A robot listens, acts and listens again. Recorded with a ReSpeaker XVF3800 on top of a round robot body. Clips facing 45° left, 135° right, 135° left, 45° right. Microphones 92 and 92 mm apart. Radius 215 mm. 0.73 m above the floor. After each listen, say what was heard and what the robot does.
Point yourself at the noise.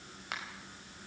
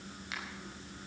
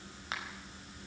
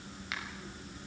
The finger snap: 80° left. Turn 80° left.
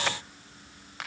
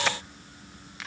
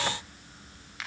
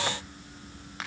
Found it: a finger snap, straight ahead, over 4 m away.